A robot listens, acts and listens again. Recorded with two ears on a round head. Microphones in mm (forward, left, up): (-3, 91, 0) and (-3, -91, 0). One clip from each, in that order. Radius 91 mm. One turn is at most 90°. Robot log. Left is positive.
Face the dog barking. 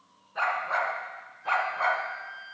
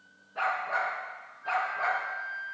note: The dog barking: about 35° left or 145° left.
cmd yaw +35
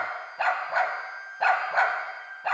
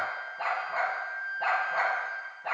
note: The dog barking: about 30° left or 150° left.
cmd yaw +30
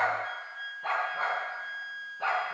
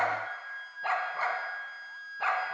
note: So it is at 30° right.
cmd yaw -30
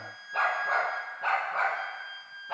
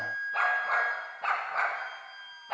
note: The dog barking is now 10° right.
cmd yaw -10
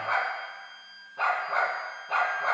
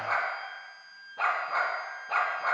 end: Facing the dog barking.